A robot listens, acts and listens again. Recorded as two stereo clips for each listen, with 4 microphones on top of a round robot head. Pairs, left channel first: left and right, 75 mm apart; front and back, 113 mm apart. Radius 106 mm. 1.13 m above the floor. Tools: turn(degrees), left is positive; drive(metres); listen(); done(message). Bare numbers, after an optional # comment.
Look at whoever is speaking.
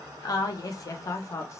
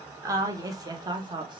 # The woman speaking: 135° left.
turn(135)
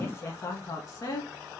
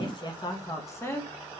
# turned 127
# The woman speaking is now 65° left.
turn(65)
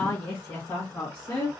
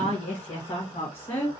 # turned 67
# The woman speaking is now 35° left.
turn(35)
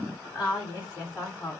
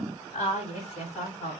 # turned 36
done("Facing the woman speaking, 2 to 4 m away.")